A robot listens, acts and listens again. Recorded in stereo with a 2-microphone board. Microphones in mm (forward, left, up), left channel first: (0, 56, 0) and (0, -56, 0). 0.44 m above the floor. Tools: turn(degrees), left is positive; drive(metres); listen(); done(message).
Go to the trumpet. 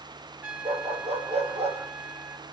turn(degrees=-30)
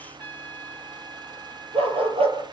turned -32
turn(degrees=15)
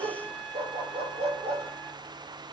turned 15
drive(metres=1.0)
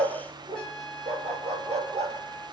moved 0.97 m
drive(metres=1.0)
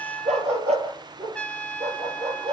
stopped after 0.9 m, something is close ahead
turn(degrees=10)
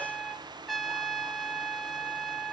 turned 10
done("Arrived at the trumpet, straight ahead.")